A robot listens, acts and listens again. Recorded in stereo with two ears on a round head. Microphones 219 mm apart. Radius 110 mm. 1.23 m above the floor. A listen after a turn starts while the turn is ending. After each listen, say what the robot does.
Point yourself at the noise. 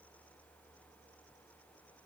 Keep listening.
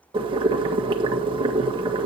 Turn 20° right.
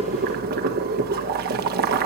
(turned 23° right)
Turn 135° right.
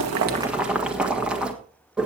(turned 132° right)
Facing the boiling.